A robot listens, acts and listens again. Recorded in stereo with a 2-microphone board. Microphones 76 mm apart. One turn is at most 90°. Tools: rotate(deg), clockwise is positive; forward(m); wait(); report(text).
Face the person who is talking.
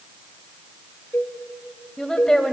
rotate(-30)
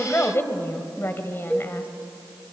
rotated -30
rotate(-90)
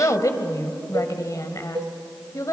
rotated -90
rotate(-55)
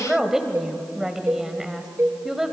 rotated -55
rotate(10)
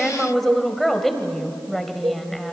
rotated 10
report("Facing the woman speaking, 1 to 2 m away.")